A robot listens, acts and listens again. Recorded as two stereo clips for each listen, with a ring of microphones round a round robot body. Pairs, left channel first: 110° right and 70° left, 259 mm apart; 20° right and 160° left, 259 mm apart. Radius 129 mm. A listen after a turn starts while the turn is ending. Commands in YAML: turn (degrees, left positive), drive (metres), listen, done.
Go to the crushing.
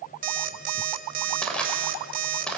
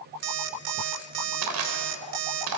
turn: 160
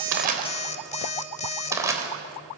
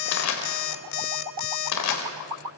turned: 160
turn: -10
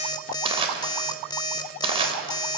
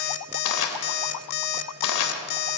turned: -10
drive: 1.0
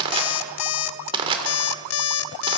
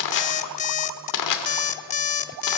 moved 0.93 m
drive: 1.0
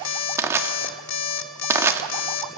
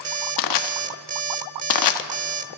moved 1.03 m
turn: -15
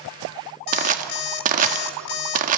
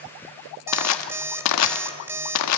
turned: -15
drive: 1.0
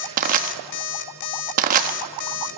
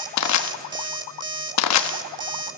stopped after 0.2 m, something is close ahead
done: "I am next to the crushing."